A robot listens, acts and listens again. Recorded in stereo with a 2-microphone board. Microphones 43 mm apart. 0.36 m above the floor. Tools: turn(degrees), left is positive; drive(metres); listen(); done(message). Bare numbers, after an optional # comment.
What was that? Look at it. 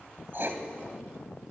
# The writing: about 55° right or 125° right.
turn(-55)
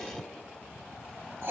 # So it is at 65° right.
turn(-65)
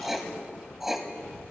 done("Found it: writing, straight ahead, 1 to 2 m away.")